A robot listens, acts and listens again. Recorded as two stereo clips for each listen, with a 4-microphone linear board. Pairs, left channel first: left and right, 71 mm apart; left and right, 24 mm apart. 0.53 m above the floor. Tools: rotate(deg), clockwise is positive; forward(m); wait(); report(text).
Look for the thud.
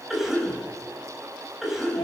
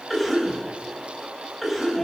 wait()
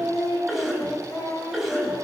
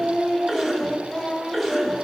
wait()
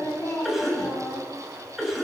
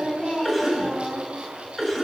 report("I can't make out a thud, only singing and a cough.")